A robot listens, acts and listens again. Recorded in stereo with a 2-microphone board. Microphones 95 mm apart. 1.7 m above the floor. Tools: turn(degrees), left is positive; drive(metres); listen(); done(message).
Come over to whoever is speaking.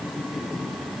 listen()
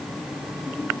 listen()
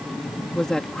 turn(degrees=30)
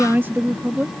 turn(degrees=-25)
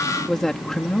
drive(metres=1.0)
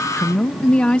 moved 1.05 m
turn(degrees=10)
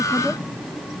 listen()
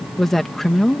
drive(metres=1.0)
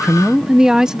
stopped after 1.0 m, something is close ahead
turn(degrees=-10)
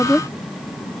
done("Arrived at the woman speaking, straight ahead.")